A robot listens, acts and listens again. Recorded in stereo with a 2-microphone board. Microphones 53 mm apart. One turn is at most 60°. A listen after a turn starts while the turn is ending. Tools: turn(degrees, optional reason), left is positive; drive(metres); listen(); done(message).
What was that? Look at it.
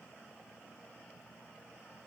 listen()
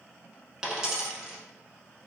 turn(degrees=-30)
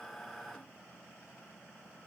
listen()
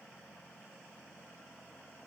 done("I heard a dropped coin, but can't make it out now. It was about 20° left or 140° right.")